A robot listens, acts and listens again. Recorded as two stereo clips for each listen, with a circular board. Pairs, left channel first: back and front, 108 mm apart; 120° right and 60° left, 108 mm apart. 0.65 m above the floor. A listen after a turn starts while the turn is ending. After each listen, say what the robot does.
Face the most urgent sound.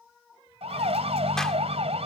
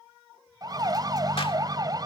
Turn 10° left.
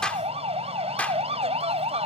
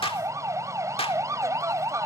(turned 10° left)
Found it: a siren, straight ahead.